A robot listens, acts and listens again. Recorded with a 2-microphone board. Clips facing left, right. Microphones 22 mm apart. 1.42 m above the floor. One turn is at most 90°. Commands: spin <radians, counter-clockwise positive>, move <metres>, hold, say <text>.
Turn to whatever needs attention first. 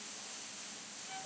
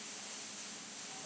hold
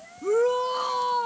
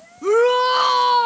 spin -1.22
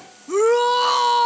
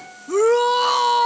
say Found it: a shout, straight ahead.